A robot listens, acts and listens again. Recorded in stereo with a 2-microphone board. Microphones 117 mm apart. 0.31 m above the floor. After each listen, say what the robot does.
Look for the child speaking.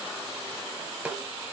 Keep listening.
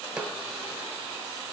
Keep listening.
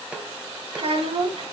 Turn 65° right.
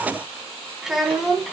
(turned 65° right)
Facing the child speaking, 2 to 4 m away.